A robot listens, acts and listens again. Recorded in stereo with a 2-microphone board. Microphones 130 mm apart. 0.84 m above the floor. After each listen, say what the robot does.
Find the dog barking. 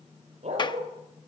Turn 60° right.
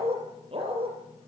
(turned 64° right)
Turn 50° right.
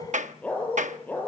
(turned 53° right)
Turn 15° left.
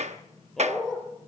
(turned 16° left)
Facing the dog barking, over 4 m away.